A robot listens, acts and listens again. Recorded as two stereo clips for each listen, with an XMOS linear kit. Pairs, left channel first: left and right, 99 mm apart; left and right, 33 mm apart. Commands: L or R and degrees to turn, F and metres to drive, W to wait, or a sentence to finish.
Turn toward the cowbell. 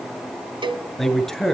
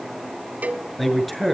R55
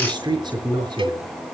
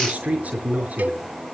R65
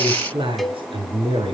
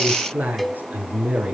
Facing the cowbell, 1 to 2 m away.